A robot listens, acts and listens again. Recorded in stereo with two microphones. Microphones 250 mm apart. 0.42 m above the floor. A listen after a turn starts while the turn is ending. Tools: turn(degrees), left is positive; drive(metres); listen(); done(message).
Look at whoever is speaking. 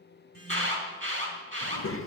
turn(degrees=60)
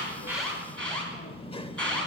turn(degrees=25)
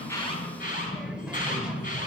done("Found it: a child speaking, straight ahead.")